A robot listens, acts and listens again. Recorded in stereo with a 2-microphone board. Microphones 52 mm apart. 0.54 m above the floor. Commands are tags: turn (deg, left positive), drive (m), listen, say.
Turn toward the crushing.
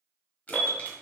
<turn deg="30"/>
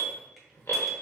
<listen/>
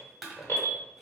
<say>Facing the crushing, 1 to 2 m away.</say>